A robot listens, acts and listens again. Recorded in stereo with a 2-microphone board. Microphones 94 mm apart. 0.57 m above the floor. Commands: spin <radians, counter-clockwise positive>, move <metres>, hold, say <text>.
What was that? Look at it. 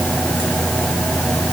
hold
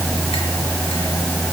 hold
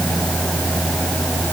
say I can't make out anything to turn to.